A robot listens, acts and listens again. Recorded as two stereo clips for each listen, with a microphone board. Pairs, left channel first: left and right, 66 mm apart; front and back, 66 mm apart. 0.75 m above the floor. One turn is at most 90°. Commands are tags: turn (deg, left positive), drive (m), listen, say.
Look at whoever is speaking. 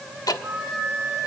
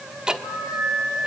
<listen/>
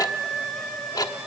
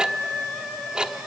<listen/>
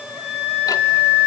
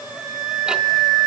<say>I can't make out anyone speaking, only ticking and a flute.</say>